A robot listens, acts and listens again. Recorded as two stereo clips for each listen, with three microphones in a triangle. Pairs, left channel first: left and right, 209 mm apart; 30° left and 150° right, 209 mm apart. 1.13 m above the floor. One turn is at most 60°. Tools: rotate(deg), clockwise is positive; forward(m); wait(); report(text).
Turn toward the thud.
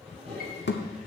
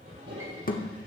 rotate(-60)
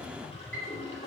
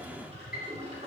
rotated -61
rotate(-10)
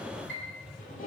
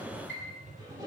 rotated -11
report("I heard a thud from this way, but can't make it out now.")